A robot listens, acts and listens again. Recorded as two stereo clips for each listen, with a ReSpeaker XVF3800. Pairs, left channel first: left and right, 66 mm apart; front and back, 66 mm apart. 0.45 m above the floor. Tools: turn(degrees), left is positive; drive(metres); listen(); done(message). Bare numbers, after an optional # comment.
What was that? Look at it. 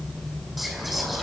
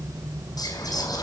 done("Facing the whispering, over 4 m away.")